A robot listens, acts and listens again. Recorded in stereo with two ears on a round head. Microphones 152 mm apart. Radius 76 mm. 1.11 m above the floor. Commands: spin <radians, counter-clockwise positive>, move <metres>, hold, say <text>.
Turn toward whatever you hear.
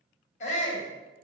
spin 0.79
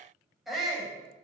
say Found it: a shout, straight ahead, over 4 m away.